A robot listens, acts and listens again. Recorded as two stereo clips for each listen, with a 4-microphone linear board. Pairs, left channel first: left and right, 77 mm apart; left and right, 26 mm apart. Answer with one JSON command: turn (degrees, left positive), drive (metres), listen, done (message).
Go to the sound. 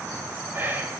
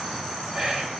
{"turn": -25}
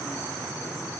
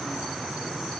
{"listen": true}
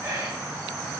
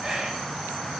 {"turn": -125}
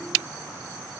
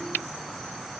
{"listen": true}
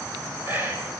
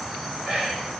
{"turn": -30}
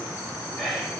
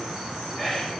{"drive": 1.0}
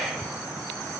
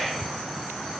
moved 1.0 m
{"drive": 1.0}
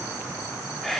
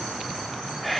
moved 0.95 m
{"drive": 1.0}
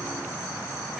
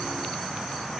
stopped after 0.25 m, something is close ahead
{"listen": true}
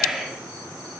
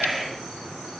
{"done": "Arrived at the whispering, straight ahead."}